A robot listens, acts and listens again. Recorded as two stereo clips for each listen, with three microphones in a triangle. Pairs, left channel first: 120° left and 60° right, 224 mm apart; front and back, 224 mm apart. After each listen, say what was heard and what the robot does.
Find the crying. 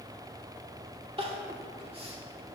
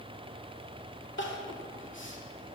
Found it: crying, straight ahead.